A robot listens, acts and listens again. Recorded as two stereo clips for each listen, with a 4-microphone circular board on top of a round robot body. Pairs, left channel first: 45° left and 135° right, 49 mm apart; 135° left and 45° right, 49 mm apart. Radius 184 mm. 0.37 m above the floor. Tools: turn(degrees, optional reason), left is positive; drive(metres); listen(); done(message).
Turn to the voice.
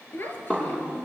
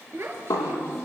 done("Found it: a child speaking, straight ahead, over 4 m away.")